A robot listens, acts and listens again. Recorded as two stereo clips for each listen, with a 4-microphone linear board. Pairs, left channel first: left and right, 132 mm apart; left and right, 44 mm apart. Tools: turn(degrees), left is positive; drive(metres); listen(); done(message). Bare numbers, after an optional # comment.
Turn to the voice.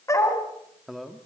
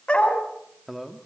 turn(-30)
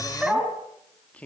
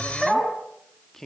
turn(30)
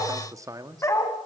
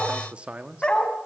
# So it is at 30° right.
turn(-30)
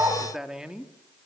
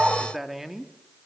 # The man speaking is now 10° right.
turn(-10)
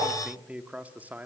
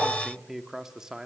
# The man speaking is now 15° right.
turn(-15)
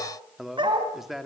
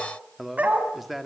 done("Found it: a man speaking, straight ahead.")